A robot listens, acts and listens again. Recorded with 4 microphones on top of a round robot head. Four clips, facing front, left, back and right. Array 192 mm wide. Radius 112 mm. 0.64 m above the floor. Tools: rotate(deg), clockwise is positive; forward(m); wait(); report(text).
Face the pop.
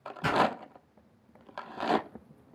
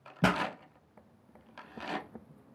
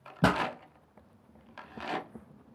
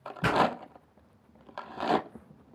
rotate(-150)
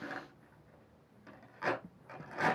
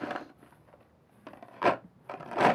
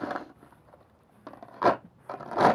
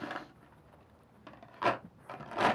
report("Facing where the pop came from. I can't hear it now.")